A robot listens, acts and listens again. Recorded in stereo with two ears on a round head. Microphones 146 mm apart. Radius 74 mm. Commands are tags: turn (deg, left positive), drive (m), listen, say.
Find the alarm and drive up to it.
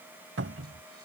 <listen/>
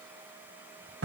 <listen/>
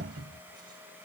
<say>I can't make out an alarm to turn to.</say>